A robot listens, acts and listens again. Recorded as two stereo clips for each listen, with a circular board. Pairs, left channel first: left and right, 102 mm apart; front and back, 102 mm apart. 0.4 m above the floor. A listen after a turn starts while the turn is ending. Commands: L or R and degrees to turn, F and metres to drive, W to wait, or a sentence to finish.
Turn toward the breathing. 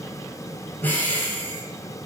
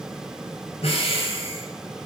L20
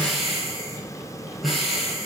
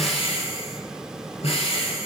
Facing the breathing, 1 to 2 m away.